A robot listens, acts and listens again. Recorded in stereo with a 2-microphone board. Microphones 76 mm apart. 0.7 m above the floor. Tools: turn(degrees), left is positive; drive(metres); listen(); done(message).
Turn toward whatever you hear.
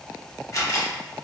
turn(degrees=40)
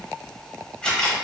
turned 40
turn(degrees=15)
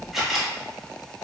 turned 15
done("Found it: a camera shutter, straight ahead.")